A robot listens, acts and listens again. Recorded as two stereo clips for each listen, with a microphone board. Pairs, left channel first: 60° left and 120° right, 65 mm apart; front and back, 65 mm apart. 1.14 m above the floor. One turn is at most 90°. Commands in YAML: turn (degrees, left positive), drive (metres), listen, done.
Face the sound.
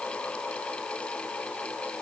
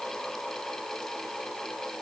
listen: true
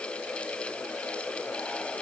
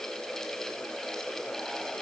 listen: true
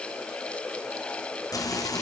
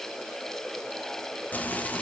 turn: 65
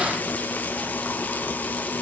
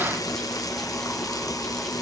done: "Facing the frying."